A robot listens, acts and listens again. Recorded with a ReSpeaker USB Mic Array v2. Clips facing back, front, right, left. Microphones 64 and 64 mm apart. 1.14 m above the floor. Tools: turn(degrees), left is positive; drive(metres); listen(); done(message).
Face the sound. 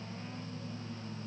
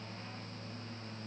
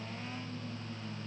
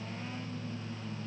listen()
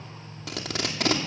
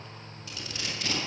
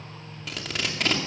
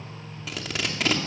turn(degrees=175)
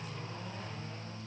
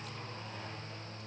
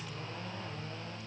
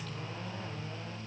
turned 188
turn(degrees=-10)
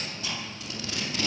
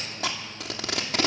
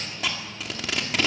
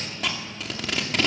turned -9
done("Facing the tape being pulled.")